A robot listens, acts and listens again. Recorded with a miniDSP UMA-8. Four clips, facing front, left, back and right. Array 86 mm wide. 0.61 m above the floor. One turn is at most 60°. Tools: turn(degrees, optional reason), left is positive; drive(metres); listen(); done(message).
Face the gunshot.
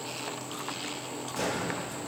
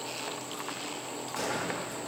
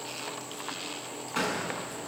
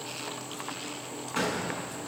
turn(degrees=-60, reason="The gunshot: 150° right.")
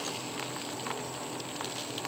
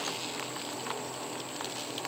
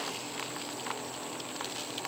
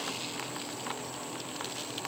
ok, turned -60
turn(degrees=-60, reason="Nothing new. It was at 90° right.")
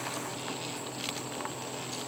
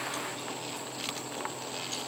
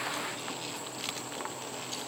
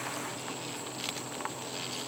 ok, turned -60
turn(degrees=-30, reason="Nothing new. It was at 30° right.")
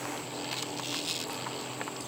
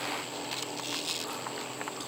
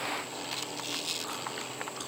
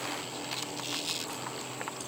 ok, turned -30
done("Facing where the gunshot came from. I can't hear it now.")